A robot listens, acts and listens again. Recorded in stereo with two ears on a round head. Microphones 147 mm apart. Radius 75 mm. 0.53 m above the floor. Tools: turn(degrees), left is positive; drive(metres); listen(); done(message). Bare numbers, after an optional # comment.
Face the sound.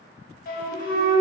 # The flute: about 55° left or 125° left.
turn(55)
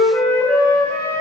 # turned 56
# So it is at 15° left.
turn(15)
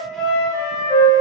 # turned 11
done("Facing the flute, under 1 m away.")